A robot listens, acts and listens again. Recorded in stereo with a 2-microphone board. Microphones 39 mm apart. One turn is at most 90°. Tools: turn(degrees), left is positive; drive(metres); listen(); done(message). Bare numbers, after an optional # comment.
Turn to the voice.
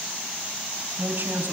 # The woman speaking: about 55° right or 125° right.
turn(-55)
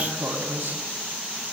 # So it is at 75° right.
turn(-75)
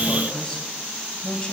# The woman speaking is now 20° left.
turn(20)
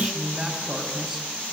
# The woman speaking is now 10° right.
turn(-10)
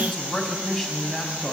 done("Facing the woman speaking.")